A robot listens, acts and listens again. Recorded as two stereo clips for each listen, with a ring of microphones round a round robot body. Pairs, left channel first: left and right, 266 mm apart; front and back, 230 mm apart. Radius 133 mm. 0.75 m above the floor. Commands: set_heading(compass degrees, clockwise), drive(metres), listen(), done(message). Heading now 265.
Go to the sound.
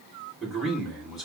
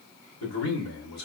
drive(1.0)
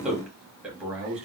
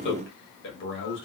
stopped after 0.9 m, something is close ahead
done("I am next to the man speaking.")